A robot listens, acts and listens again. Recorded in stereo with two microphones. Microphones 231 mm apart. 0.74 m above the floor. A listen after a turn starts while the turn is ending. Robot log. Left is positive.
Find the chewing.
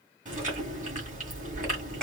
note: The chewing: about 35° right or 145° right.
cmd yaw -35
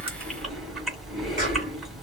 end: Found it: chewing, straight ahead.